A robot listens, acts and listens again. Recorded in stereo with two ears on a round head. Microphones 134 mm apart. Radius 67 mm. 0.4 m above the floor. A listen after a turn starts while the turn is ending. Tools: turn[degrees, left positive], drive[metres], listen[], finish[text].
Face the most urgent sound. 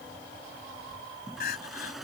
Thought: The crying: about 70° left or 110° left.
Action: turn[70]
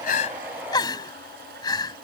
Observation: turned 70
Thought: So it is at 30° left.
Action: turn[30]
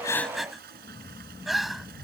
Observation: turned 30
Action: finish[Facing the crying.]